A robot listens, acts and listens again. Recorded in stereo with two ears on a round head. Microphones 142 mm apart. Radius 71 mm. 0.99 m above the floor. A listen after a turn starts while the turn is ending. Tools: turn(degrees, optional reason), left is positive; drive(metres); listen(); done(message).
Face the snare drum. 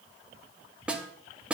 turn(degrees=-30)
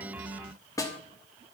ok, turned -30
turn(degrees=20, reason="So it is at 20° left.")
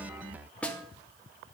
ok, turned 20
turn(degrees=10, reason="The snare drum is now 10° left.")
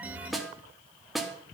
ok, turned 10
done("Facing the snare drum.")